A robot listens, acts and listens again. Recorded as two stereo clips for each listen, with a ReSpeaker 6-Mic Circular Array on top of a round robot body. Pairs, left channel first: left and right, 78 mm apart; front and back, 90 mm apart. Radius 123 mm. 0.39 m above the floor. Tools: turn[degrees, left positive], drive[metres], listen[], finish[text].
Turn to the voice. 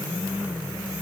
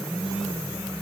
Action: listen[]
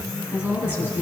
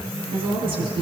Thought: The woman speaking: 160° right.
Action: turn[-160]
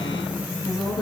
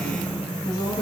Thought: The woman speaking is now 50° left.
Action: turn[50]
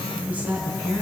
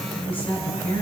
Thought: The woman speaking is now 20° right.
Action: turn[-20]
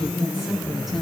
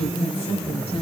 Action: finish[Facing the woman speaking, over 4 m away.]